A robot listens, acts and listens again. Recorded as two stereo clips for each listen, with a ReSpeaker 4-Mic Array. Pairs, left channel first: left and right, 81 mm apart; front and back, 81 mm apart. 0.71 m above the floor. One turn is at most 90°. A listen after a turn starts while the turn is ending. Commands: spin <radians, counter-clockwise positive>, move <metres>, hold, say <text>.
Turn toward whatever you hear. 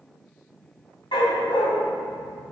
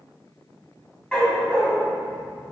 spin 1.48
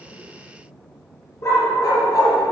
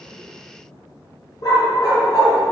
spin 0.70
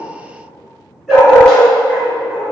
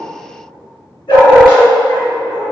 say Found it: a dog barking, straight ahead, 2 to 4 m away.